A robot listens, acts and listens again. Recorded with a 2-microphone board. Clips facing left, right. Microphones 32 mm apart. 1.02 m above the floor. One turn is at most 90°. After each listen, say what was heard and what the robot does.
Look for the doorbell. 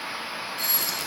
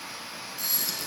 The doorbell: about 50° left or 130° left. Turn 50° left.
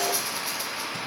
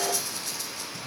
Keep listening.
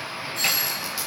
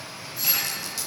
So it is at 80° left. Turn 80° left.
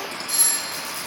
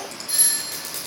The doorbell is now 20° right. Turn 20° right.
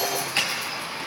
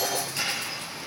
Keep listening.
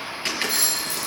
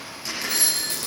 Found it: a doorbell, straight ahead, 2 to 4 m away.